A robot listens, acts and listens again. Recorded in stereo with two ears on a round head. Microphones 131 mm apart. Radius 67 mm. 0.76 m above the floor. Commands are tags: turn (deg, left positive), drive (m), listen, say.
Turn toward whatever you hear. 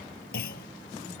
<turn deg="75"/>
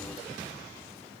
<listen/>
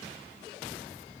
<say>I heard a clunk, but can't make it out now. It was about straight ahead or 30° left.</say>